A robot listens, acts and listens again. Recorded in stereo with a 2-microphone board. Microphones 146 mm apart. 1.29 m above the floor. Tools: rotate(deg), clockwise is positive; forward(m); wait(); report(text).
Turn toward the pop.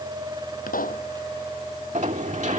rotate(-70)
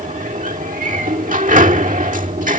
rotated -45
wait()
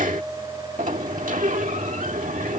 report("I heard a pop, but can't make it out now. It was about 25° left or 65° left.")